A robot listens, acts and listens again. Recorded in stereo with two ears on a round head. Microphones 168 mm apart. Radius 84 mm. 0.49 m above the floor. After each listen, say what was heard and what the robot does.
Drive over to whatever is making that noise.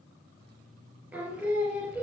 Turn 30° right.
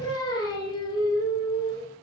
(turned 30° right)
So it is at 20° left. Turn 20° left.
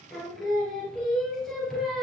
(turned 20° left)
Drive 1.0 m forward.
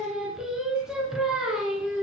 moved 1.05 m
Drive 1.0 m forward.
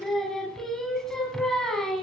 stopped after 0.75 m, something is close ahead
Arrived at the singing, straight ahead.